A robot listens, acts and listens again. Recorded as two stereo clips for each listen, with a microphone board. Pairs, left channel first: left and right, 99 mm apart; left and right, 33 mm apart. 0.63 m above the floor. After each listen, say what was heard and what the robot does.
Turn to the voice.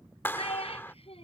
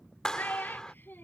Turn 90° left.
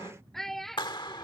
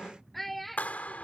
Facing the child speaking.